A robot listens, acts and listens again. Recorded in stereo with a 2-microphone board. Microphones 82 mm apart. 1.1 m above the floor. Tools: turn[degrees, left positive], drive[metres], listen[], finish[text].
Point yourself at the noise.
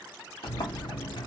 Thought: The sliding door: about 70° left or 110° left.
Action: turn[70]
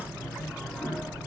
Action: finish[Found it: a sliding door, straight ahead, under 1 m away.]